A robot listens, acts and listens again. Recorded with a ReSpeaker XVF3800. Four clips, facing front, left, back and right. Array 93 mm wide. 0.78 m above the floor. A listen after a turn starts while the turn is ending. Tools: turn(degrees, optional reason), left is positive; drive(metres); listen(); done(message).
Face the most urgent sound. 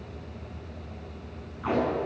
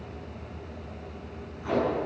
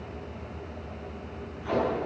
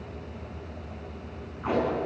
listen()
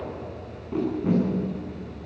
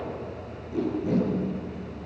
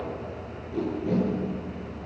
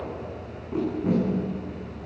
listen()
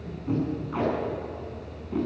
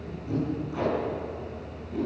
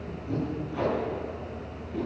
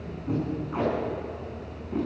done("I can't make out anything urgent, only tape being pulled.")